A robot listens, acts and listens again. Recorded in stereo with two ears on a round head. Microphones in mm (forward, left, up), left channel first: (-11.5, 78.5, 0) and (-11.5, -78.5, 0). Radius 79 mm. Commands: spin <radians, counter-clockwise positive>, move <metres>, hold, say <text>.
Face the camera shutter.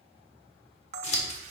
spin -0.61
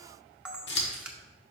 say Found it: a camera shutter, straight ahead.